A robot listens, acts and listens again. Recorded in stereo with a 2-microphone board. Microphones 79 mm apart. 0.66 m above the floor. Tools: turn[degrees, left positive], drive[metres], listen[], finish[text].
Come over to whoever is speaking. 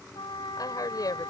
Thought: The woman speaking: about 55° left or 125° left.
Action: turn[55]
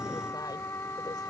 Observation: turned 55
Action: listen[]
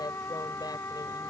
Action: listen[]
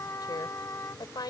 Thought: So it is at 70° left.
Action: turn[70]
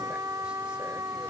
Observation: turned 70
Action: listen[]
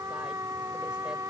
Action: listen[]
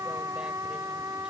Action: finish[I heard a woman speaking from this way, but can't make it out now. I did not reach it.]